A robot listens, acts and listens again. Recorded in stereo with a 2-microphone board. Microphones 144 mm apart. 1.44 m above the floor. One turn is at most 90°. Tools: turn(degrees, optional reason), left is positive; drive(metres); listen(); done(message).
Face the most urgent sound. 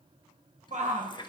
turn(degrees=-55, reason="The shout: about 55° right or 125° right.")
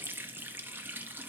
listen()
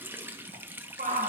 turn(degrees=-65, reason="So it is at 65° right.")
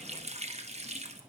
listen()
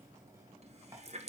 listen()
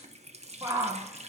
turn(degrees=-20, reason="The shout is now 20° right.")
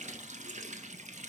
listen()
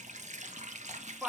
done("Found it: a shout, straight ahead.")